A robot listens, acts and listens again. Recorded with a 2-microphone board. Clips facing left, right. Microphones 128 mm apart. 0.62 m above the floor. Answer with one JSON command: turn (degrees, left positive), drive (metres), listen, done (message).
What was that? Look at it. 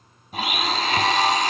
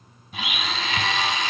{"turn": 45}
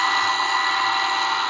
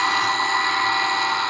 {"done": "Found it: a blender, straight ahead."}